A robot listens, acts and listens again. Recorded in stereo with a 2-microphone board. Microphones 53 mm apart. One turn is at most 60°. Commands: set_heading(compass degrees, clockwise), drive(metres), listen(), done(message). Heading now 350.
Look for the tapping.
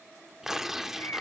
listen()
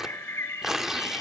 listen()
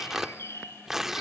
done("I can't make out tapping to turn to.")